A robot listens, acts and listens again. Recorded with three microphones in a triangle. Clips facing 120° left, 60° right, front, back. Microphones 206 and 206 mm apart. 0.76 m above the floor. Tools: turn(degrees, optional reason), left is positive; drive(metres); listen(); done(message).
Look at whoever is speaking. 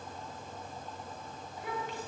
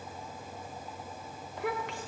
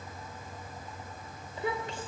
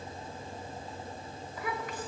turn(degrees=-65, reason="The child speaking: 65° right.")
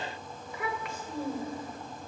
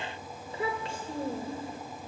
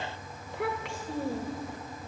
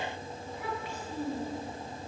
done("Facing the child speaking, 2 to 4 m away.")